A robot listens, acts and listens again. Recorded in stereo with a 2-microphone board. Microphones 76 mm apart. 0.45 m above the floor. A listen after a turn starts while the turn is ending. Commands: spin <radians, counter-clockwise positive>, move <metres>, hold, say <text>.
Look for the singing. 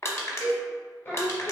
spin 0.70
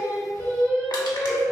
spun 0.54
spin 0.52
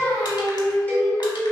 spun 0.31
spin 0.52
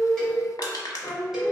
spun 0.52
spin 0.26
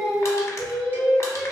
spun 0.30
say Found it: singing, straight ahead.